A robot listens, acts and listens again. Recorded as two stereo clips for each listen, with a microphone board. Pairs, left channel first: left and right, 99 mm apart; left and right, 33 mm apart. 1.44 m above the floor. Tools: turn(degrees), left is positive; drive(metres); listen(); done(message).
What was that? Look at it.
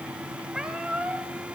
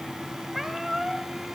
turn(degrees=-30)
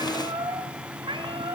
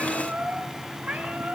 turn(degrees=-125)
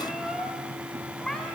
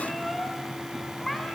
done("Found it: a cat meowing, straight ahead, 2 to 4 m away.")